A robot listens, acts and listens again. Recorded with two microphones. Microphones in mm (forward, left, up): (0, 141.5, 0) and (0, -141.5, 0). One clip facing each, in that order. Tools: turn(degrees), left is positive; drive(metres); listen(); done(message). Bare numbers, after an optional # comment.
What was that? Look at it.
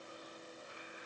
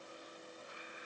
listen()
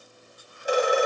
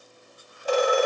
turn(30)
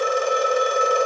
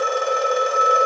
# So it is at 135° left.
turn(135)
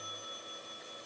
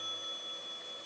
listen()
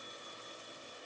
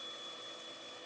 listen()
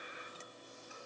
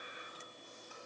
done("Facing where the phone ringing came from. I can't hear it now.")